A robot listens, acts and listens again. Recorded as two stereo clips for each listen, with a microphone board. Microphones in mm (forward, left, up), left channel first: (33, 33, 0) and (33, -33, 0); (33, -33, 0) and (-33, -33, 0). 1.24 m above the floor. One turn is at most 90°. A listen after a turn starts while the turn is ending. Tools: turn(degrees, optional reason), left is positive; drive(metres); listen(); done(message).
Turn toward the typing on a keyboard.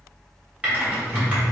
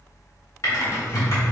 turn(degrees=-25, reason="The typing on a keyboard: 25° right.")
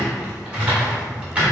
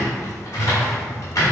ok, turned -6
turn(degrees=-20, reason="The typing on a keyboard is now 20° right.")
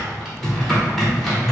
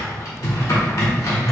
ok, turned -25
done("Facing the typing on a keyboard, 1 to 2 m away.")